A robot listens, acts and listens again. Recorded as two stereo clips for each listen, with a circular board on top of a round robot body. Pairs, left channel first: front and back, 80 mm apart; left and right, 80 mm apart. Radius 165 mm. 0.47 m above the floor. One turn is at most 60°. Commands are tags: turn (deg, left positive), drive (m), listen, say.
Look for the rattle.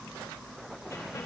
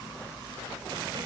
<listen/>
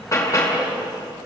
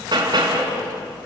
<listen/>
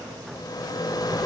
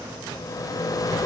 <turn deg="45"/>
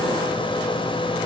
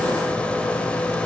<turn deg="15"/>
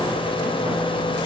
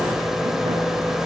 <say>Facing the rattle, 1 to 2 m away.</say>